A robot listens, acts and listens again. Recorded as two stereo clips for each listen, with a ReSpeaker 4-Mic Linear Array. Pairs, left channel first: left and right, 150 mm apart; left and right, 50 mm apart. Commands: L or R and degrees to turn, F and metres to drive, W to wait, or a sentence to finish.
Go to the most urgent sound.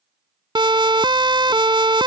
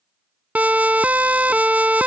R30
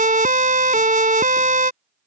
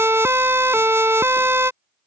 R120
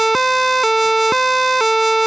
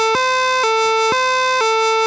F1.0
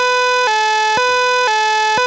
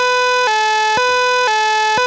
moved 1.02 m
F1.0
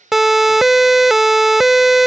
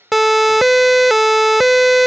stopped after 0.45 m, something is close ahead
I am next to the siren.